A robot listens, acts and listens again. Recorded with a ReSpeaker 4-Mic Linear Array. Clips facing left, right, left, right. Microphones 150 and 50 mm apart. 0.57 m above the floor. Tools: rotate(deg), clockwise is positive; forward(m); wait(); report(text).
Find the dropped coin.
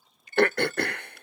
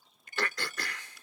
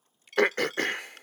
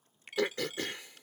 rotate(30)
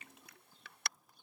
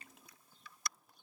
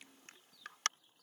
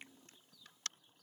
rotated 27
wait()
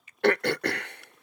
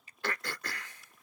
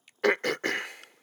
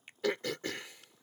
report("I heard a dropped coin, but can't make it out now. It was about 15° left or 140° right.")